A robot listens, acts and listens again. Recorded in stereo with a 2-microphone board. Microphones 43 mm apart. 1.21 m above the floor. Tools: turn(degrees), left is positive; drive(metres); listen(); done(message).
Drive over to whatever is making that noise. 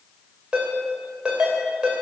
turn(degrees=-20)
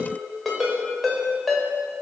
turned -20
drive(metres=1.0)
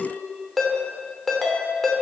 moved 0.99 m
drive(metres=1.0)
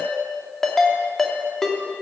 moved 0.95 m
turn(degrees=10)
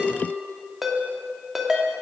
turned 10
drive(metres=1.0)
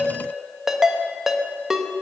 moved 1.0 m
turn(degrees=-10)
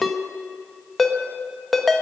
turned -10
drive(metres=1.0)
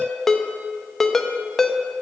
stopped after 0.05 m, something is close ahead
turn(degrees=10)
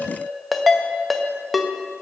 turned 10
done("I am next to the ringtone.")